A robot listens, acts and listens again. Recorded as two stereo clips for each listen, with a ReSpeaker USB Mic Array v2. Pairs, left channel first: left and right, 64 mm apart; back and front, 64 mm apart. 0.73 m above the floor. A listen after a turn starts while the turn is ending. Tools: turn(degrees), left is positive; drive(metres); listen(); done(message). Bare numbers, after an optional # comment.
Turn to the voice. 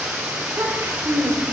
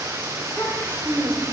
# The child speaking: 120° right.
turn(-120)
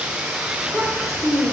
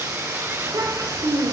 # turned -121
done("Found it: a child speaking, straight ahead, 1 to 2 m away.")